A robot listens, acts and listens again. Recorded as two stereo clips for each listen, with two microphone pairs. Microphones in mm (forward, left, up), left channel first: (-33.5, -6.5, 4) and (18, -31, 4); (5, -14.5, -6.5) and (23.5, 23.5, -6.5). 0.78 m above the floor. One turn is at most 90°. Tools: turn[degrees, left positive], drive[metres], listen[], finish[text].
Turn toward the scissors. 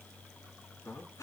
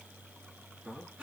Action: listen[]
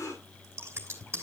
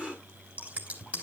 Thought: The scissors: 15° left.
Action: turn[15]
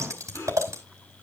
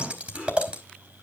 Action: finish[Found it: scissors, straight ahead.]